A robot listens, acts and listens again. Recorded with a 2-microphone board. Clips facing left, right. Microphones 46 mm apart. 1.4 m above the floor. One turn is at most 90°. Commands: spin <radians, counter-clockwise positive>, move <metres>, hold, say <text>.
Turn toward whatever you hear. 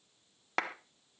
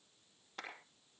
spin 1.57
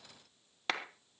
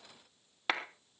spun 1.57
spin -0.17
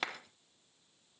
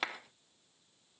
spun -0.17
say Found it: a clap, straight ahead, 1 to 2 m away.